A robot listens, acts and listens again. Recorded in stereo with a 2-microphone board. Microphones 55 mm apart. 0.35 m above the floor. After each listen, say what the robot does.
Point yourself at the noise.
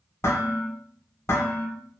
Turn 55° left.
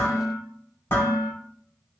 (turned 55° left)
Turn 55° left.
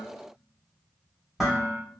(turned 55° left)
Found it: dishes clattering, straight ahead, 1 to 2 m away.